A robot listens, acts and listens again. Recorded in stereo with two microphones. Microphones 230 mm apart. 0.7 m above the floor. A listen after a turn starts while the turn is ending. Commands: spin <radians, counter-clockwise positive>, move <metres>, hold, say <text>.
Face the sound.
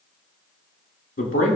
spin 1.13
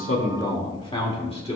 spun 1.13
spin 0.52
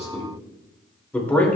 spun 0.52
spin 0.17
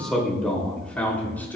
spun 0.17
spin 0.17
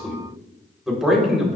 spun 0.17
say Found it: a man speaking, straight ahead.